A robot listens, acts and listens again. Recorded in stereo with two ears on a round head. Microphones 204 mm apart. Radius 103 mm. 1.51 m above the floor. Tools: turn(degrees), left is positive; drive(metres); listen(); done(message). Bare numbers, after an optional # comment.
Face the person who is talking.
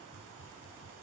listen()
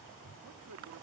# The man speaking: about 70° right or 110° right.
turn(-70)
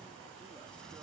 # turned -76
listen()
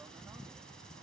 listen()
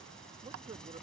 # So it is at 25° right.
turn(-25)
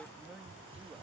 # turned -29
# The man speaking is now 10° right.
turn(-10)
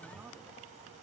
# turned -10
listen()
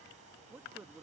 done("Found it: a man speaking, straight ahead.")